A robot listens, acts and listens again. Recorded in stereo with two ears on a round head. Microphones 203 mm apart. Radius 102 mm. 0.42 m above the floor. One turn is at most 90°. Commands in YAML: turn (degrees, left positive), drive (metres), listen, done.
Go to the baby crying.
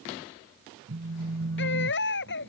turn: 50
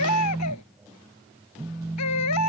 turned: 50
turn: 75
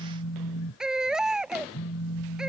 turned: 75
drive: 1.0
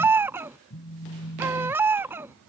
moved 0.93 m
turn: -10
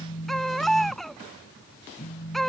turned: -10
drive: 1.0
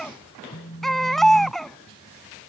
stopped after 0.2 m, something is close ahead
done: "Arrived at the baby crying, straight ahead."